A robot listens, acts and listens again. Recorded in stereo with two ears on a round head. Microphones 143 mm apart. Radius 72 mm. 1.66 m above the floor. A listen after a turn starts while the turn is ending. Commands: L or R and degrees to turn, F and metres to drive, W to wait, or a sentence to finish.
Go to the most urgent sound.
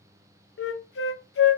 W
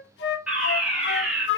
R30
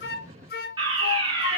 R145
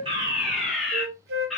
F1.0
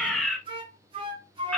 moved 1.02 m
F1.0
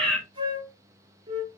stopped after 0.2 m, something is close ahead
I am next to the fire alarm.